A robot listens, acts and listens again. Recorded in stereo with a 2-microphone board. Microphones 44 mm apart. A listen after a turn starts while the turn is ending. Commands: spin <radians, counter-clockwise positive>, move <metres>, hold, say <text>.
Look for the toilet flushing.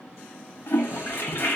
spin 1.05
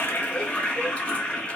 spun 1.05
spin 0.70
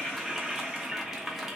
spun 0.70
say Facing the toilet flushing, under 1 m away.